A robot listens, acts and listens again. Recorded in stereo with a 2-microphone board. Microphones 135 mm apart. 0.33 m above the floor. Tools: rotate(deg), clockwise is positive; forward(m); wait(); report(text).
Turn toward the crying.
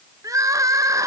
rotate(25)
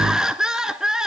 report("Found it: crying, straight ahead, 1 to 2 m away.")